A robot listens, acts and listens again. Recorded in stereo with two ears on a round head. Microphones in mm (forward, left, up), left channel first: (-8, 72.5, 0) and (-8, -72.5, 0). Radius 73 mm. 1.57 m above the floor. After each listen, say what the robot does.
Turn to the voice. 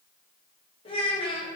Turn 30° left.
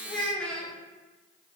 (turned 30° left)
Facing the child speaking, under 1 m away.